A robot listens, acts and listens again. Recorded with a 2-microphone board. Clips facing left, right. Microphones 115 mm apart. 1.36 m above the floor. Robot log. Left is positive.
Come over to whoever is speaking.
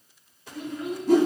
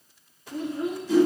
note: The child speaking: about 35° right or 145° right.
cmd yaw -35
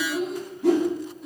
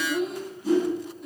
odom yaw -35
cmd fwd 1.0
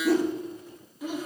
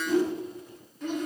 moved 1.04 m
note: The child speaking is now 10° left.
cmd yaw +10
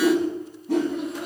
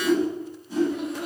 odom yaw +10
cmd fwd 1.0
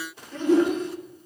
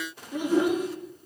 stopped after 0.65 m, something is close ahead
note: The child speaking is now 10° right.
cmd yaw -10
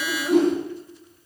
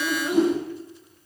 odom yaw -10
end: I am next to the child speaking.